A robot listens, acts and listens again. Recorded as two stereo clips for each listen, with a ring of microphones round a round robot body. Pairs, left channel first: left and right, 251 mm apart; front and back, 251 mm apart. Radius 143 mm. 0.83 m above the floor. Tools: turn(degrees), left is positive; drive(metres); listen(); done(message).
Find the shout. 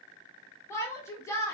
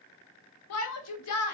turn(degrees=10)
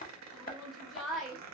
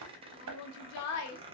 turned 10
done("Facing the shout, under 1 m away.")